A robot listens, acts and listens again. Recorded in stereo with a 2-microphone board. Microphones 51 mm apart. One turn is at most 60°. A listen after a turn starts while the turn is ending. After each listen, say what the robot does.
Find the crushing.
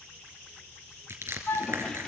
Turn 60° right.
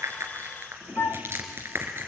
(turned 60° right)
Turn 55° right.
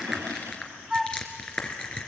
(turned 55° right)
Turn 20° left.
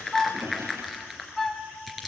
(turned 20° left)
Facing the crushing.